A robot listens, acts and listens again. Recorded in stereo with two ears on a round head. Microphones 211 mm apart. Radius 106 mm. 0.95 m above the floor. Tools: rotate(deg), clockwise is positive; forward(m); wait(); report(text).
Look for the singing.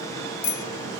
wait()
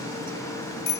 wait()
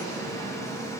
report("I can't make out singing, only a bicycle bell.")